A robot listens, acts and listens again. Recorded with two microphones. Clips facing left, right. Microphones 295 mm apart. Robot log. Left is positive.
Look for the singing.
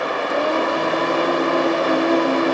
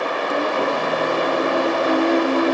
cmd yaw -30
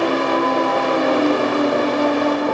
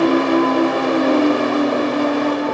note: The singing: about 20° right or 160° right.
cmd yaw -20
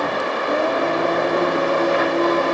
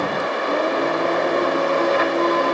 note: So it is at 155° right.
cmd yaw -155
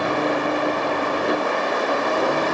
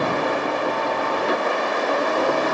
cmd idle
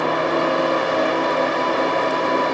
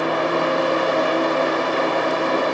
note: The singing is now 30° left.
cmd yaw +30
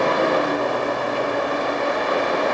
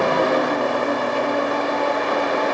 note: The singing is now 10° left.
cmd yaw +10
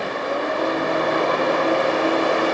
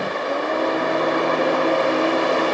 end: Found it: singing, straight ahead, 2 to 4 m away.